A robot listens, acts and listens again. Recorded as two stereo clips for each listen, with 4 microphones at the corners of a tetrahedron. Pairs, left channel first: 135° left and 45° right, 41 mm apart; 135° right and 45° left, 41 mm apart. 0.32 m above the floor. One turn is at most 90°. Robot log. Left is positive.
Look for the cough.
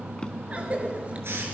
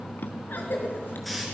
note: The cough: 100° right.
cmd yaw -90
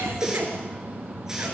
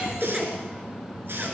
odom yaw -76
note: The cough is now 25° right.
cmd yaw -25
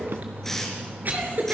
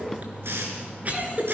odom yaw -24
end: Found it: a cough, straight ahead, over 4 m away.